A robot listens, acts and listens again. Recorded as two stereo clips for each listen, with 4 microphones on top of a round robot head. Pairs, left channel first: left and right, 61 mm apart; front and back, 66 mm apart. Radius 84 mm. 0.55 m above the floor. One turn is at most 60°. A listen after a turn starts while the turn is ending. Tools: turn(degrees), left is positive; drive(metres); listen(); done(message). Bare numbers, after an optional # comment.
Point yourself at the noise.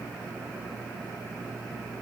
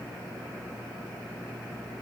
listen()
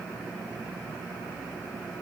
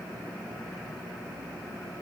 listen()
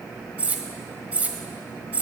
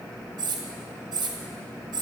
# The cutlery clinking: 160° right.
turn(-60)
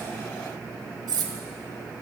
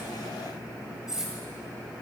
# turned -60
# The cutlery clinking is now 95° right.
turn(-60)
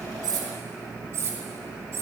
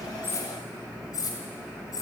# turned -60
# The cutlery clinking is now 40° right.
turn(-40)
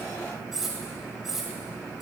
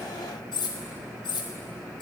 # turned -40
done("Facing the cutlery clinking.")